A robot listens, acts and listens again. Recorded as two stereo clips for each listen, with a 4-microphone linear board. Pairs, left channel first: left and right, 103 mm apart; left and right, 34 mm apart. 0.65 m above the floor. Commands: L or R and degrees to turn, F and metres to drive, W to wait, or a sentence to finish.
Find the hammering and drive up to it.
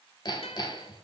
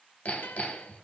L45
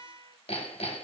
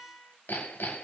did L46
L90
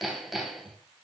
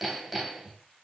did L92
F1.0
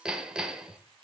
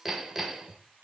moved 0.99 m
R10
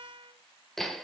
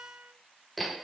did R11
F1.0
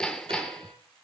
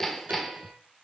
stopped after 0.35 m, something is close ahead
Arrived at the hammering, straight ahead.